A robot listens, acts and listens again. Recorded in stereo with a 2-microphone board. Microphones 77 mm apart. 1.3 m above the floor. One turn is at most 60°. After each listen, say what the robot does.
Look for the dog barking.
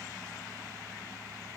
Keep listening.
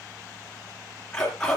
Turn 30° left.
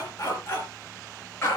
Turn 60° left.
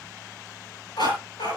Turn 60° left.
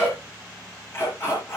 Turn 35° left.
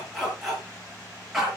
Found it: a dog barking, straight ahead, over 4 m away.